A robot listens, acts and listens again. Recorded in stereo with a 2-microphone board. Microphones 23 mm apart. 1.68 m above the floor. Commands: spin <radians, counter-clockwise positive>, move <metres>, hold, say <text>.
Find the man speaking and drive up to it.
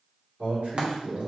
spin -1.05
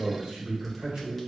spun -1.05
spin -0.96
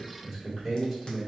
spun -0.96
spin -0.26
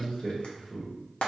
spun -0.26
move 1.0
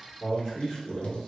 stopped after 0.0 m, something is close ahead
say Blocked. The man speaking is further on, straight ahead.